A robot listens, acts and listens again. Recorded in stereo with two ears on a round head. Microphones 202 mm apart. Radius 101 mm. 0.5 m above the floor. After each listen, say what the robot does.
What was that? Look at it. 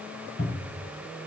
Turn 45° left.
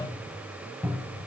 Found it: a cupboard door, straight ahead.